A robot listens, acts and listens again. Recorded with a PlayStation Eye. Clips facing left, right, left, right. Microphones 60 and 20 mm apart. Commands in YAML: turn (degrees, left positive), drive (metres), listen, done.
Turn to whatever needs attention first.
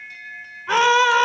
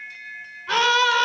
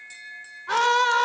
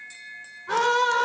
turn: 15
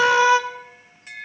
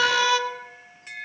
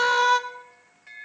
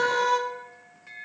turn: 150
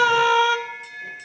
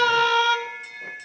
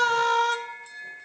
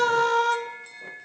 turn: 10
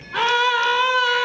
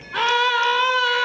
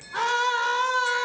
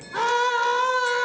done: "Facing the scream, 1 to 2 m away."